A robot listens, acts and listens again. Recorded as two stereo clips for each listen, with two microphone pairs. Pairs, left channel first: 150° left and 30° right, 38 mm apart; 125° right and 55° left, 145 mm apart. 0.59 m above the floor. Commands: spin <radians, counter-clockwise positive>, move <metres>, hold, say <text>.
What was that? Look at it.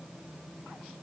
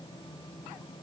hold
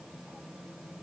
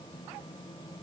hold
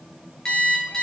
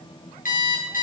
spin -2.44
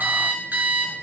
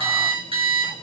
say Facing the alarm clock, over 4 m away.